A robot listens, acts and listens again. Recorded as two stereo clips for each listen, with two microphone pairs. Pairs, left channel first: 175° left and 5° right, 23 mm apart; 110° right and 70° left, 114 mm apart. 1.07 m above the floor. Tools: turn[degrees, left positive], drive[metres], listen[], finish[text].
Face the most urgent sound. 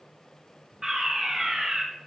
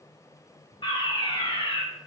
Thought: The fire alarm: 70° right.
Action: turn[-70]
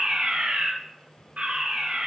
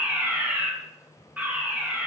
Action: finish[Facing the fire alarm, 2 to 4 m away.]